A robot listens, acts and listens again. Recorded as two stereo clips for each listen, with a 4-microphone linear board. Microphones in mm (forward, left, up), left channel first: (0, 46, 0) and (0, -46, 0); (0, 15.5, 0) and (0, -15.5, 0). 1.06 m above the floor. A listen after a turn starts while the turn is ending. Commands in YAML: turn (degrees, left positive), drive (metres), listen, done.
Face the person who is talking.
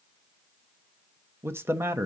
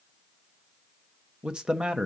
turn: -25
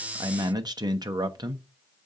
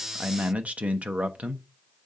turn: -130
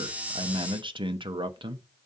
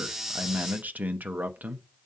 turn: -60
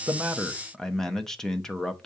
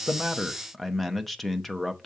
done: "Facing the man speaking, under 1 m away."